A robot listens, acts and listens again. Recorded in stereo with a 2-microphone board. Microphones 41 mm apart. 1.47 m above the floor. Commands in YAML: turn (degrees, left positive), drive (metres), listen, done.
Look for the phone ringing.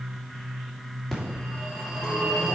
turn: 30
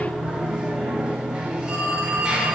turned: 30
turn: -15
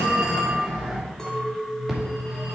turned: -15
done: "Found it: a phone ringing, straight ahead."